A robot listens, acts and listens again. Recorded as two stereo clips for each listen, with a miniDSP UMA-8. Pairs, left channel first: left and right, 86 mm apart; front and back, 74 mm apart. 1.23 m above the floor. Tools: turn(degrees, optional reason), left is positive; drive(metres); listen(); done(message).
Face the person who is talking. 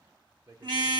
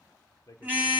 turn(degrees=-45, reason="The man speaking: 45° right.")
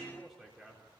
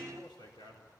done("Facing the man speaking.")